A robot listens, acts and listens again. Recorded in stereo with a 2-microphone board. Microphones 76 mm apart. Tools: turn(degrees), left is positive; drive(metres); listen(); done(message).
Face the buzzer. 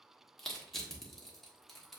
listen()
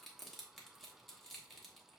listen()
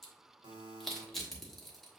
turn(degrees=-90)
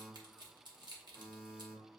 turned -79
done("Facing the buzzer, 1 to 2 m away.")